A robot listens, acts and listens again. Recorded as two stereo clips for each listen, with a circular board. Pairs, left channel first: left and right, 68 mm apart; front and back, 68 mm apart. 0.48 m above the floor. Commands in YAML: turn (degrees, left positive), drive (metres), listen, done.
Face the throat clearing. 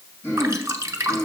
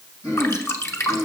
turn: 35
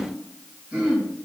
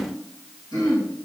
turn: -10
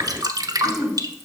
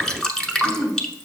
done: "Found it: throat clearing, straight ahead, 2 to 4 m away."